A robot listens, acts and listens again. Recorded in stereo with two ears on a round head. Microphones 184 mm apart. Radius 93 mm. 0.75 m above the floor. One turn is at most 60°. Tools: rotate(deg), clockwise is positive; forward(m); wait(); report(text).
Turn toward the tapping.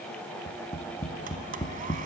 rotate(-15)
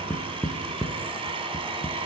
report("Facing the tapping, 1 to 2 m away.")